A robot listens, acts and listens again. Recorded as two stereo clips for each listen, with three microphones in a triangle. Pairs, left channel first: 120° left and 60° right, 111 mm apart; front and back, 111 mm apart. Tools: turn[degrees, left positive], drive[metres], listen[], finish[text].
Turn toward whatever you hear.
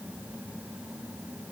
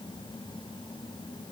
Action: listen[]
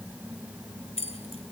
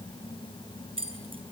Thought: The keys jangling: 145° left.
Action: turn[145]
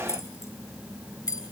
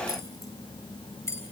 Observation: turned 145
Thought: The keys jangling is now 65° left.
Action: turn[65]
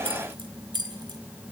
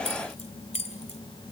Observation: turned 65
Thought: The keys jangling is now 10° right.
Action: turn[-10]
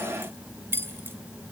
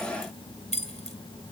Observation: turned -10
Thought: The keys jangling is now 10° left.
Action: turn[10]
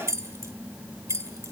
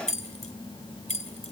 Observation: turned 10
Action: finish[Found it: keys jangling, straight ahead.]